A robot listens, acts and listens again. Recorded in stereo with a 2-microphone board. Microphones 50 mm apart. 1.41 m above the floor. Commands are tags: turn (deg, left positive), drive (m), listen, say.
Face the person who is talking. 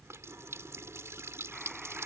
<listen/>
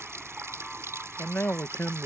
<turn deg="45"/>
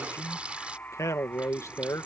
<turn deg="90"/>
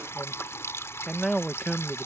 <say>Found it: a man speaking, straight ahead.</say>